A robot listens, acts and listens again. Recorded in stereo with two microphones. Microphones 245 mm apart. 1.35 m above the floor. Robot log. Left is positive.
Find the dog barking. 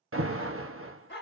note: The dog barking: about 45° left or 135° left.
cmd yaw +45
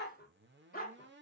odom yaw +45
note: So it is at 35° left.
cmd yaw +35
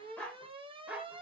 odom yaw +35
end: Found it: a dog barking, straight ahead.